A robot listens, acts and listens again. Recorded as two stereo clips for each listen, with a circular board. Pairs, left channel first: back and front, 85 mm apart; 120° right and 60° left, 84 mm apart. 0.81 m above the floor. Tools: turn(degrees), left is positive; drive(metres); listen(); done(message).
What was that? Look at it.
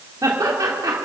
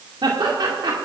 turn(degrees=40)
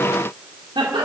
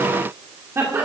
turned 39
done("Found it: laughter, straight ahead, 2 to 4 m away.")